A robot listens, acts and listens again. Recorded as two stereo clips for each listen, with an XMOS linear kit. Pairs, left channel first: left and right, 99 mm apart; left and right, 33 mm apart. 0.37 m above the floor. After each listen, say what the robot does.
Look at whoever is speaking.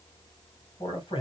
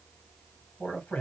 Turn 60° left.
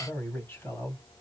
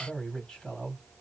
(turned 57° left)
Turn 25° left.
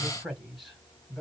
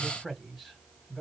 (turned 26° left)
Facing the man speaking, 2 to 4 m away.